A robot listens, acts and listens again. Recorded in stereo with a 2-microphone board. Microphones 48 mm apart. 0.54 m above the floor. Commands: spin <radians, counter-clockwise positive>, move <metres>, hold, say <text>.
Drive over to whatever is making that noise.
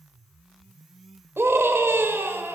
spin -0.96
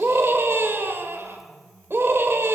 spin -1.05
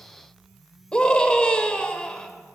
spin 0.35
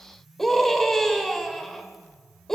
move 1.0
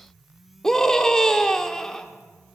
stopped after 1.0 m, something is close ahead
spin 0.26
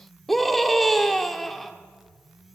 say I am next to the scream.